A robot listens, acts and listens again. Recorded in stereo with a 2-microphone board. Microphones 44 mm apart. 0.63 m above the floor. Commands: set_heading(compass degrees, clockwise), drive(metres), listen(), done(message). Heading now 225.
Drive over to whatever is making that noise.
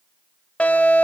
set_heading(195)
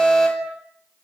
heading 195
drive(1.0)
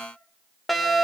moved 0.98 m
drive(1.0)
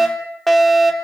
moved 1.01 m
drive(1.0)
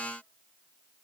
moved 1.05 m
listen()
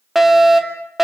drive(1.0)
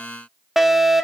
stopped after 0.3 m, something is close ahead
set_heading(205)
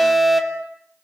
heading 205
done("I am next to the fire alarm.")